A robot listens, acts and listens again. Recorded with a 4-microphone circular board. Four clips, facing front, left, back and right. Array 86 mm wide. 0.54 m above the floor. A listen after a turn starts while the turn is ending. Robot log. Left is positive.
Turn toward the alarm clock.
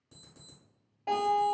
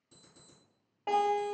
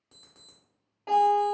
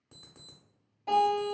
note: The alarm clock: 115° right.
cmd yaw -115
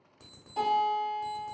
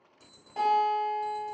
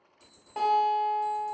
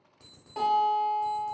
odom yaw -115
note: The alarm clock is now 10° right.
cmd yaw -10
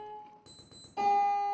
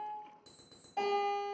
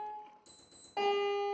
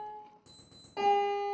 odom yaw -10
end: Facing the alarm clock, under 1 m away.